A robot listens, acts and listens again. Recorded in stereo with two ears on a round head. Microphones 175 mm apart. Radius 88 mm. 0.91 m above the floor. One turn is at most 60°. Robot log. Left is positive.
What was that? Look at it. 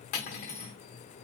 note: The cutlery clinking: about 40° left or 140° left.
cmd yaw +40
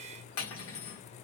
note: So it is at 95° left.
cmd yaw +60
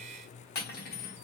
note: The cutlery clinking is now 50° left.
cmd yaw +50
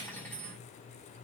note: The cutlery clinking is now 10° left.
cmd yaw +10
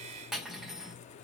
end: Found it: cutlery clinking, straight ahead, 1 to 2 m away.